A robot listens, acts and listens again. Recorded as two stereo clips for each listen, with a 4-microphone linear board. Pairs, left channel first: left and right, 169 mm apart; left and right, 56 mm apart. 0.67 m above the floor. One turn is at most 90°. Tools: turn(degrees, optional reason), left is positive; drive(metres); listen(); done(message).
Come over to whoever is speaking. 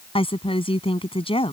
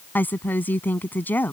turn(degrees=30, reason="The woman speaking: about 30° left or 150° left.")
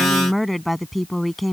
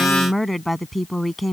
drive(metres=1.0)
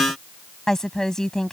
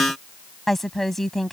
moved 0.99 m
drive(metres=1.0)
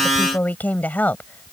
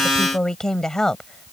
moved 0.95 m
turn(degrees=10, reason="The woman speaking is now 10° left.")
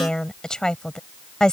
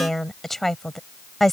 drive(metres=1.0)
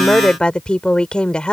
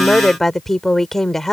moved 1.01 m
drive(metres=1.0)
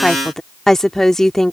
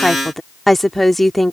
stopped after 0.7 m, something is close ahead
done("I am next to the woman speaking.")